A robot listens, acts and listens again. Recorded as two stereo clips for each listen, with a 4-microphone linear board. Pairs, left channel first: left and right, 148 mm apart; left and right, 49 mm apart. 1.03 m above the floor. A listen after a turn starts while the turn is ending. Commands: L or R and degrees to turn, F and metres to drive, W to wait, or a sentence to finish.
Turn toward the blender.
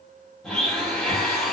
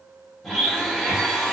L30
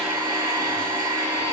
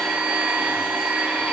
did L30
R25
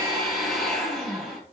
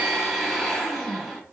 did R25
Found it: a blender, straight ahead, 1 to 2 m away.